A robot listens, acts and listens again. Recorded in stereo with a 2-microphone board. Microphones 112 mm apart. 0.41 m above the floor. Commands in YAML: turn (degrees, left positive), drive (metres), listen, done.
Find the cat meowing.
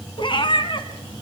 turn: 45
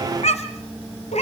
turn: 90
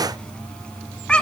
turn: 10
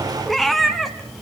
done: "Found it: a cat meowing, straight ahead."